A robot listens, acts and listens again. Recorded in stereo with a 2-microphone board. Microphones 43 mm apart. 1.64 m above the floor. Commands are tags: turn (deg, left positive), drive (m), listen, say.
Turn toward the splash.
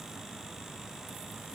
<listen/>
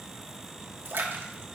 <turn deg="-65"/>
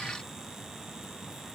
<listen/>
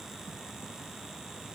<say>I heard a splash, but can't make it out now. It was about straight ahead or 50° right.</say>